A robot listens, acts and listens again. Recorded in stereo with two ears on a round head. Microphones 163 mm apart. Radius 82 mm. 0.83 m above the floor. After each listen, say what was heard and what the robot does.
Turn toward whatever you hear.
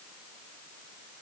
Keep listening.
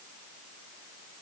Keep listening.
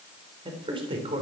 The man speaking: about 30° right or 150° right. Turn 30° right.
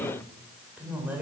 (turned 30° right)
So it is at 10° right. Turn 10° right.
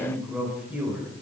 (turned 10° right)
The man speaking is now 10° right. Turn 10° right.
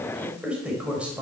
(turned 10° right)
Facing the man speaking.